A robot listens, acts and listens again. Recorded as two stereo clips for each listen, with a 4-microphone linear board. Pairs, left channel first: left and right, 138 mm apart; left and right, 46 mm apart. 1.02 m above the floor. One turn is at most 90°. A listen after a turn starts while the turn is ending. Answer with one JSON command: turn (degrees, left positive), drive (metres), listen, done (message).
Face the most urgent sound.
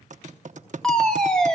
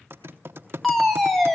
{"turn": 30}
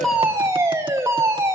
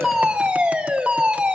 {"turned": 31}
{"turn": -25}
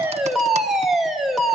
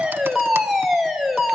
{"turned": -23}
{"done": "Facing the fire alarm, 2 to 4 m away."}